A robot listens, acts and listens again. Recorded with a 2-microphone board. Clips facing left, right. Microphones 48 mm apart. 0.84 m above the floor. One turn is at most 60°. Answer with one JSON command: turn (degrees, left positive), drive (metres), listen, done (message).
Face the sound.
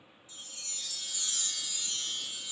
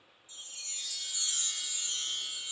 {"turn": -25}
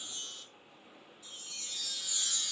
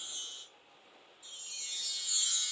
{"done": "Found it: a chime, straight ahead, 1 to 2 m away."}